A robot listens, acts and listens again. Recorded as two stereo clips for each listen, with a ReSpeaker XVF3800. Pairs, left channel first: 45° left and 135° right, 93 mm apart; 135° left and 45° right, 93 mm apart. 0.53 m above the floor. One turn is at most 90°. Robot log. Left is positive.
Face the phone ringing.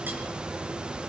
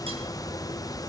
cmd idle
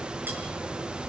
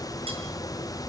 cmd idle
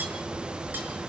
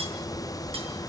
end: I can't make out a phone ringing.